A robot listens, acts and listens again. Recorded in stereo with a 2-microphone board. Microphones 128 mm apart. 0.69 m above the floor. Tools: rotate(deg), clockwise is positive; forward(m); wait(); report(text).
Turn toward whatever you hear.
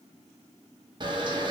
rotate(35)
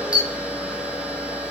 rotate(10)
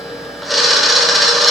report("Facing the camera shutter, under 1 m away.")